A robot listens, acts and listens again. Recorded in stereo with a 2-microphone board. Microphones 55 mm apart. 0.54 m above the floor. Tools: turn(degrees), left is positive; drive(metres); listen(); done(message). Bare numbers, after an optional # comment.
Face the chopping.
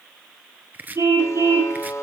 # The chopping: about 35° right or 145° right.
turn(-35)
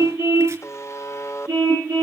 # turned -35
listen()
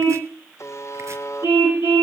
listen()
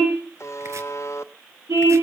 done("I heard chopping, but can't make it out now. It was about straight ahead or 110° right.")